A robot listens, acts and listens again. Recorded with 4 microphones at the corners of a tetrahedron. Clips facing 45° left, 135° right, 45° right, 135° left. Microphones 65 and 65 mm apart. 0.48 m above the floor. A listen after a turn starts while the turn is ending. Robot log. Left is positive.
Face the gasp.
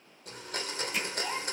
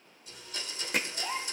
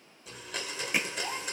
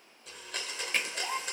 note: The gasp: 170° left.
cmd yaw +170
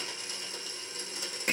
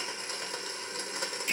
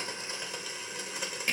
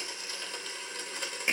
end: Facing where the gasp came from. I can't hear it now.